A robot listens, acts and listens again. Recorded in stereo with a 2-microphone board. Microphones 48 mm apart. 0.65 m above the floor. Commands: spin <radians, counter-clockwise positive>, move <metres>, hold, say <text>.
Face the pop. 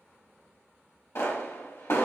spin 1.22
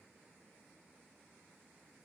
hold
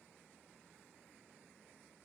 say I heard a pop, but can't make it out now. It was about straight ahead or 40° left.